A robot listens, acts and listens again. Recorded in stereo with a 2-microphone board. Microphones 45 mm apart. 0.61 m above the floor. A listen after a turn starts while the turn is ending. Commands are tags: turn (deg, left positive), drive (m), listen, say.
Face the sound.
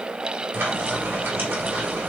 <turn deg="-50"/>
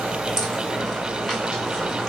<say>Found it: frying, straight ahead, 2 to 4 m away.</say>